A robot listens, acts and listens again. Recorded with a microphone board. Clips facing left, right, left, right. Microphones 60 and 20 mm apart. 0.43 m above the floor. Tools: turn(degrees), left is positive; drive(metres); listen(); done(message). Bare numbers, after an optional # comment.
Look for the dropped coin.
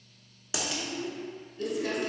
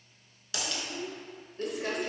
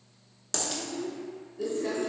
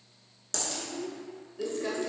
# The dropped coin: about 20° left or 160° left.
turn(20)
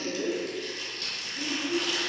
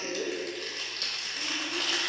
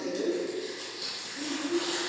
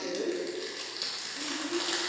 listen()
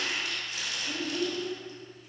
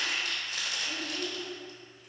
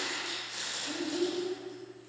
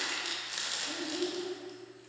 done("I heard a dropped coin, but can't make it out now. It was about straight ahead or 140° left.")